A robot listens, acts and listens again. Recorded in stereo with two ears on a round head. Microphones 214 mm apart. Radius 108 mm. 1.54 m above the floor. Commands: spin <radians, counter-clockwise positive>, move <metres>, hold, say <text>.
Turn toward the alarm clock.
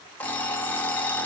spin 0.52
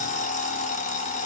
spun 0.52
spin 2.53
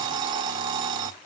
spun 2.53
spin -0.44
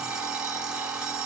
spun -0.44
say Facing the alarm clock, 1 to 2 m away.